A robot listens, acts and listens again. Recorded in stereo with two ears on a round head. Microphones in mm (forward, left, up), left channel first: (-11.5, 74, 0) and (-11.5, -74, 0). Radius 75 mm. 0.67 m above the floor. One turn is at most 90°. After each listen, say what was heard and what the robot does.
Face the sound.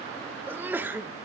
Turn 30° right.
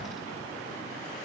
Keep listening.
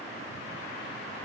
I heard a sneeze, but can't make it out now. It was about 20° left or 140° right.